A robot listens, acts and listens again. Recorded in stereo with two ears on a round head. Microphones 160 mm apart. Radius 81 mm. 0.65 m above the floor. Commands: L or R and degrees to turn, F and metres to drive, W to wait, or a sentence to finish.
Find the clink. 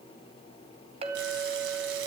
R35
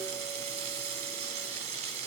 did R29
W
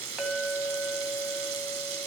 Found it: a clink, straight ahead, 2 to 4 m away.